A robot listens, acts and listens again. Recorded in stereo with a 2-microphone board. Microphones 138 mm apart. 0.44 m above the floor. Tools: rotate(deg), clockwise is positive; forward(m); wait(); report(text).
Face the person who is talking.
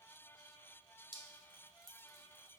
wait()
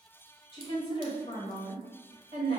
rotate(-45)
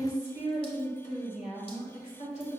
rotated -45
rotate(-80)
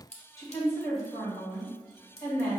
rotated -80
rotate(-25)
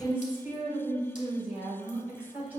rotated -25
rotate(15)
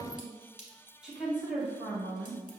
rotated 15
report("Facing the woman speaking.")